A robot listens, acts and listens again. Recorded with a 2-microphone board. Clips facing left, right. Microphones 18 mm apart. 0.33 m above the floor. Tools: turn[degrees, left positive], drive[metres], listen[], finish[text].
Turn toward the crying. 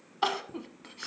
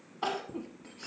Thought: The crying: about 50° left or 130° left.
Action: turn[50]
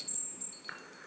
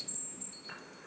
Action: listen[]
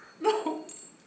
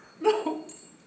Action: finish[Found it: crying, straight ahead.]